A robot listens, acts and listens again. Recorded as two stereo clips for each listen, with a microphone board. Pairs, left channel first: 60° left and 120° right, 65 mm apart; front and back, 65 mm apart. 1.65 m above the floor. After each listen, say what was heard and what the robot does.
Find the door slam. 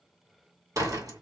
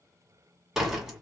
The door slam: 95° right. Turn 95° right.
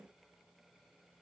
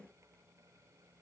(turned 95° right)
Facing where the door slam came from. I can't hear it now.